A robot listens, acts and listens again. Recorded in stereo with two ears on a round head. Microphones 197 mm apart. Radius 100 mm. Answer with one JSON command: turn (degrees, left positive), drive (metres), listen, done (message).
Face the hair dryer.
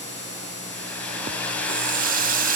{"turn": 30}
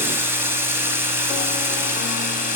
{"listen": true}
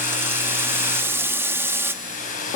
{"turn": 140}
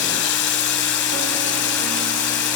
{"listen": true}
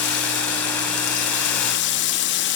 {"listen": true}
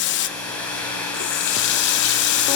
{"done": "Found it: a hair dryer, straight ahead."}